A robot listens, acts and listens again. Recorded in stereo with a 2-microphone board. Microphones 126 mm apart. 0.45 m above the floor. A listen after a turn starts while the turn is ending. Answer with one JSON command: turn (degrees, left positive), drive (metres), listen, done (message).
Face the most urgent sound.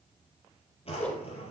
{"listen": true}
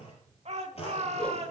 {"turn": -60}
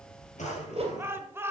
{"turn": -25}
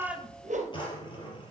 {"listen": true}
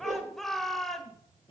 {"done": "Found it: a shout, straight ahead."}